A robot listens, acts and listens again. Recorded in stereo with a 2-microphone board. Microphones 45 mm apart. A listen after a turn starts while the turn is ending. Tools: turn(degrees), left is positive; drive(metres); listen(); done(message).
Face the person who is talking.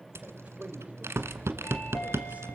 turn(degrees=-30)
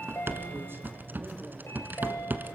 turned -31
listen()
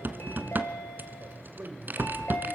turn(degrees=-115)
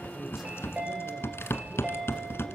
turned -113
listen()
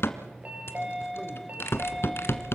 listen()
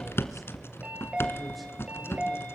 done("I heard a man speaking from this way, but can't make it out now.")